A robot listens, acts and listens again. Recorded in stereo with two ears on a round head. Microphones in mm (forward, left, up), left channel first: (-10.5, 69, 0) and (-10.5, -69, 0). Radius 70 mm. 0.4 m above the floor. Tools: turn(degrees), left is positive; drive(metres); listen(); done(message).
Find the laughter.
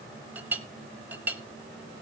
listen()
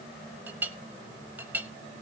listen()
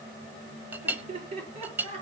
turn(degrees=-40)
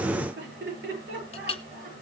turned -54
turn(degrees=-80)
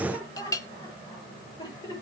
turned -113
turn(degrees=25)
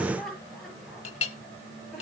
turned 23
done("Found it: laughter, straight ahead.")